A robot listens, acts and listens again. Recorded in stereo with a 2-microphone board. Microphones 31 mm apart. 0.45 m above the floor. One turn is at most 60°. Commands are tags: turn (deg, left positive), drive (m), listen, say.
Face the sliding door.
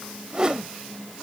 <listen/>
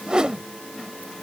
<listen/>
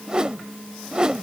<say>I can't make out a sliding door, only a whoosh.</say>